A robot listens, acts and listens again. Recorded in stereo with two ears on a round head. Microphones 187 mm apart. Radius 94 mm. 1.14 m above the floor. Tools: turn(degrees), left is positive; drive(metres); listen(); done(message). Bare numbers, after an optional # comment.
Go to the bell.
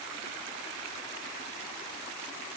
listen()
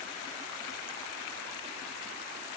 listen()
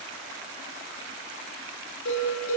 # The bell: about 70° left or 110° left.
turn(70)
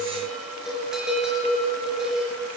drive(1.0)
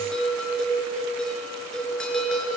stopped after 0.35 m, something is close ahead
done("Something is in my way. I am facing the bell but have not reached it.")